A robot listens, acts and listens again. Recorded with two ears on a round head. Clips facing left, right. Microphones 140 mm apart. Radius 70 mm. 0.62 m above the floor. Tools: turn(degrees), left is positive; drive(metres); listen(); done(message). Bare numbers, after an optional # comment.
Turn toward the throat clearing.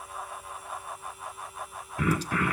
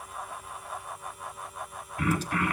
turn(90)
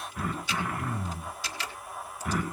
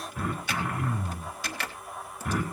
done("Found it: throat clearing, straight ahead.")